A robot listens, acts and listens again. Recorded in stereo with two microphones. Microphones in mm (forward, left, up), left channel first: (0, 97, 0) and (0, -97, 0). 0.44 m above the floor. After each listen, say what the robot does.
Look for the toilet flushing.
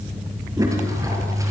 Turn 15° right.
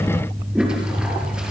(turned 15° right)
Found it: a toilet flushing, straight ahead, over 4 m away.